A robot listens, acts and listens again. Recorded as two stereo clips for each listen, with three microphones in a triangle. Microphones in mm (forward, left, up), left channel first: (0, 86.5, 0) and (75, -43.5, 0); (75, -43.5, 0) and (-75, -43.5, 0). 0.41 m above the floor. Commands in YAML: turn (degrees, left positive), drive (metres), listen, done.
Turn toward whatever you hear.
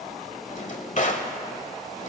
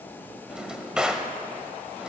turn: 95
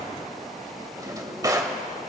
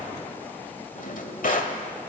done: "Found it: a drawer, straight ahead, 1 to 2 m away."